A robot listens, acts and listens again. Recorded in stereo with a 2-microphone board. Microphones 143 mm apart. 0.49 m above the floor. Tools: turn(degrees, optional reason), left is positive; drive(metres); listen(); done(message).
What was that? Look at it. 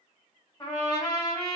turn(degrees=30, reason="The trumpet: about 30° left or 150° left.")
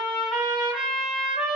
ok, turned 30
done("Found it: a trumpet, straight ahead, 1 to 2 m away.")